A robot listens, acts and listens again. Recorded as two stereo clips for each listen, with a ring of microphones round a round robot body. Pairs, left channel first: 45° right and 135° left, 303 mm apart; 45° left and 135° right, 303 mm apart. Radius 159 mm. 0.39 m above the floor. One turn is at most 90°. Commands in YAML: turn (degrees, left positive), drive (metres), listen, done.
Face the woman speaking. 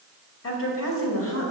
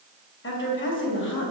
done: "Facing the woman speaking, 2 to 4 m away."